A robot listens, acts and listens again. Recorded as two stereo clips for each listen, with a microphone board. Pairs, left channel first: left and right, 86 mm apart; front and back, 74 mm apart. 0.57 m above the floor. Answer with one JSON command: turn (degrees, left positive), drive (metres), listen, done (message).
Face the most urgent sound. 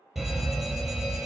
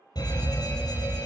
{"done": "Facing the fire alarm, over 4 m away."}